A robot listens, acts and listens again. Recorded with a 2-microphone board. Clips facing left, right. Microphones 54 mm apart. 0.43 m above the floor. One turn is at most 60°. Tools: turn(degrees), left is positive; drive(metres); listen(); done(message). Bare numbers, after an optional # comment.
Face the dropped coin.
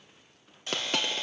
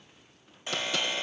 # The dropped coin: about 45° left or 135° left.
turn(45)
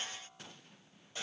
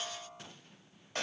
listen()
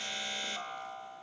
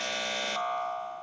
done("I heard a dropped coin, but can't make it out now. It was about straight ahead or 90° left.")